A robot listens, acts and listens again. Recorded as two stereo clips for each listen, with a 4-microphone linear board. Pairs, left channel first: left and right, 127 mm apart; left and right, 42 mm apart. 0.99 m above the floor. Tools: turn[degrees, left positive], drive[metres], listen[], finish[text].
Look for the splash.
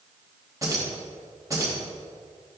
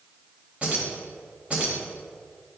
Action: listen[]
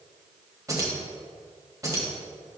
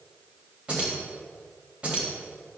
Action: listen[]
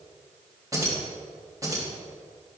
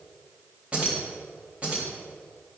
Action: finish[I can't make out a splash, only keys jangling.]